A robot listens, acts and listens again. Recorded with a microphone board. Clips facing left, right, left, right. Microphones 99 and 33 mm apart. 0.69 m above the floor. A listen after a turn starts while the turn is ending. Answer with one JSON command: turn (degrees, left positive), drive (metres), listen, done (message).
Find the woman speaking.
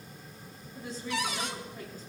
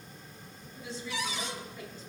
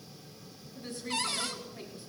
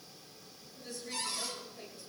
{"turn": 50}
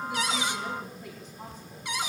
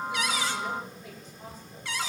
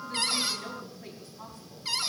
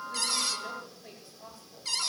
{"turn": 75}
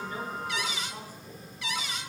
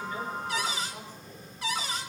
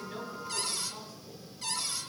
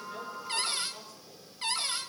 {"listen": true}
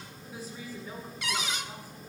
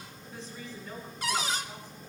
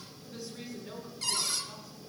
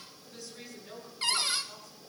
{"turn": 10}
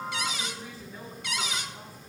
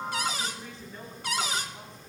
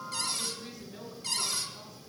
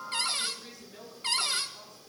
{"done": "Facing the woman speaking, over 4 m away."}